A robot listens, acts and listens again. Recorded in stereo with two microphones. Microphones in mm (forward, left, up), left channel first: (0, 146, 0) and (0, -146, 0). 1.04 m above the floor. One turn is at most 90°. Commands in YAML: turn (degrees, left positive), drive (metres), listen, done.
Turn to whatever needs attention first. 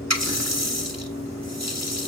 listen: true
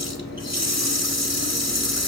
listen: true
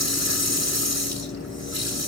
done: "I can't make out anything urgent to turn to."